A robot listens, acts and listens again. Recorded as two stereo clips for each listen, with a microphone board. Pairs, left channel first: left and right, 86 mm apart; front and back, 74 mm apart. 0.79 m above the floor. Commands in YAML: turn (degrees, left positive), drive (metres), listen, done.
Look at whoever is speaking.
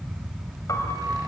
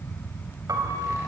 listen: true
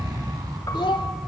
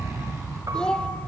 turn: 80
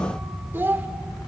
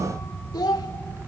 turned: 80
turn: -25
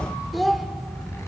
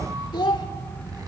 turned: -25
done: "Found it: a child speaking, straight ahead."